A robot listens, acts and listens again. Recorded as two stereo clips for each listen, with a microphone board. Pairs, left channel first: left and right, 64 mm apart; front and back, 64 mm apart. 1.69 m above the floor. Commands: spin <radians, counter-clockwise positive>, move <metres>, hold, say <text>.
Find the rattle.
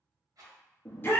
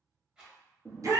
spin -1.75
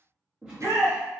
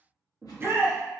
hold
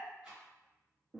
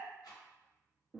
spin -0.26
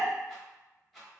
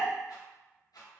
say Facing the rattle.